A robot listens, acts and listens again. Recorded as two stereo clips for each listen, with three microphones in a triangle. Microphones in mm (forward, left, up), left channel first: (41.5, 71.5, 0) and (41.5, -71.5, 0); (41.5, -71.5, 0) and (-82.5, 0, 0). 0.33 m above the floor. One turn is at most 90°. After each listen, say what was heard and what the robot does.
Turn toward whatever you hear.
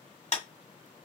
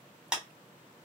The clap: 65° left. Turn 65° left.
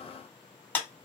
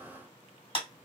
The clap is now 10° left. Turn 10° left.
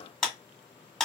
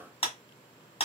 Found it: a clap, straight ahead, 1 to 2 m away.